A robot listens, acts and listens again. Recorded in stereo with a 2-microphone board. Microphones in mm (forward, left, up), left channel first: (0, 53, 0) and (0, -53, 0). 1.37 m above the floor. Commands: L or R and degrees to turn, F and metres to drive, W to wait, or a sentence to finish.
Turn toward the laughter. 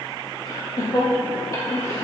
L30
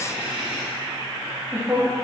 R25
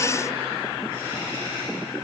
R30
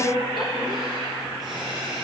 Found it: laughter, straight ahead, 2 to 4 m away.